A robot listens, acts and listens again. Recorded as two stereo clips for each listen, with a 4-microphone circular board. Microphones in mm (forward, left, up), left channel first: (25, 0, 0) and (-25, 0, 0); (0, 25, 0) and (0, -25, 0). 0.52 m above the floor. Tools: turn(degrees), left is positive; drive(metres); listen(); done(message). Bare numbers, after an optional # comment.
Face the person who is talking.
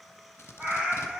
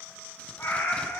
listen()
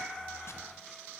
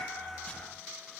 listen()
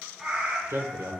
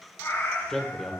# The man speaking: 175° left.
turn(175)
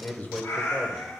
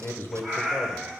# The man speaking is now 60° left.
turn(60)
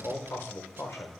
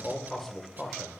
# The man speaking is now 10° left.
turn(10)
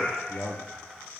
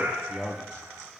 done("Found it: a man speaking, straight ahead, 1 to 2 m away.")